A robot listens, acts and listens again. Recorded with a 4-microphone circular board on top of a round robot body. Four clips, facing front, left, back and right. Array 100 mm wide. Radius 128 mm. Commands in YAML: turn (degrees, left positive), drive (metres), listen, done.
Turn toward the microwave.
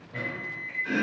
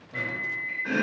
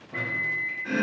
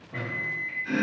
turn: -160
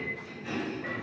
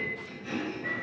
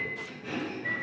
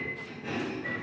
turn: 10
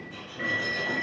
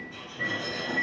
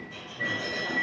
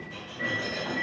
done: "Found it: a microwave, straight ahead."